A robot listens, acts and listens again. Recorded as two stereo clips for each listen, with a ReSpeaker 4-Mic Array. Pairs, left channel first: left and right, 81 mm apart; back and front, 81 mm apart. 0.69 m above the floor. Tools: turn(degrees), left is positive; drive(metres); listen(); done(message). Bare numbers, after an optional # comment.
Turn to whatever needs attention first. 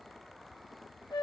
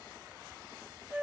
listen()
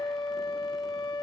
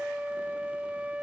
listen()
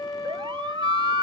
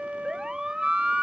# The siren: 85° right.
turn(-85)
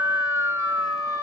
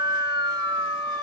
# The siren is now 30° right.
turn(-30)
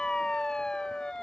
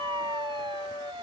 # The siren is now 10° left.
turn(10)
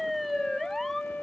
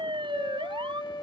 done("Found it: a siren, straight ahead.")